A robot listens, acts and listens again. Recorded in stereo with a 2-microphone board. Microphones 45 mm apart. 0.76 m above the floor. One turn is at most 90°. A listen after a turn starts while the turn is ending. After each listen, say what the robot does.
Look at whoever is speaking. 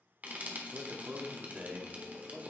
Turn 30° right.
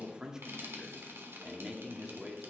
Turn 10° right.
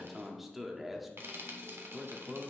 Facing the man speaking.